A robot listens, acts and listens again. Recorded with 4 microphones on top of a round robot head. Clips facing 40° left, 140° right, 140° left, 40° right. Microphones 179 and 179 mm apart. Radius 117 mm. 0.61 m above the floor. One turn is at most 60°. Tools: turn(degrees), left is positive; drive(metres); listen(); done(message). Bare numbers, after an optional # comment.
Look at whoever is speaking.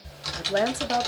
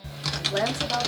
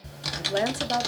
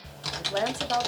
# The woman speaking: 75° left.
turn(60)
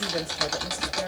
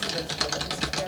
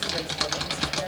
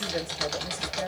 # Nothing new. It was at 15° left.
turn(15)
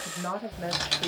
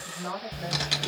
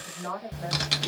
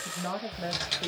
# The woman speaking is now 10° left.
turn(10)
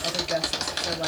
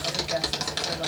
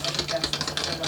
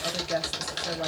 listen()
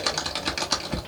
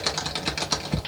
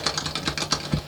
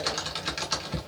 listen()
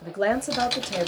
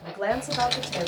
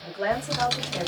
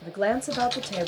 done("Facing the woman speaking, 1 to 2 m away.")